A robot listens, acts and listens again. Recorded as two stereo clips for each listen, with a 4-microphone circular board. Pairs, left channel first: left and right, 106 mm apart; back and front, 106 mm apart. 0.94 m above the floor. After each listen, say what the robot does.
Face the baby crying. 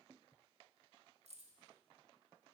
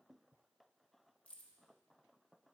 Keep listening.
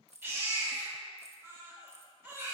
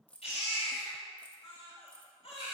Turn 160° right.
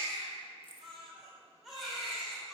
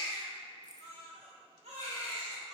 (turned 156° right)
Found it: a baby crying, straight ahead.